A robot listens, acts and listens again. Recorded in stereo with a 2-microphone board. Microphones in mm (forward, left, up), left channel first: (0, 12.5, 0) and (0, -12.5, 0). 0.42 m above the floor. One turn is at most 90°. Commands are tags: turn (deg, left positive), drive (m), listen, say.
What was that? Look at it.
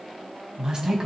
<turn deg="-30"/>
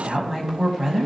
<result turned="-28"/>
<say>Facing the woman speaking, 2 to 4 m away.</say>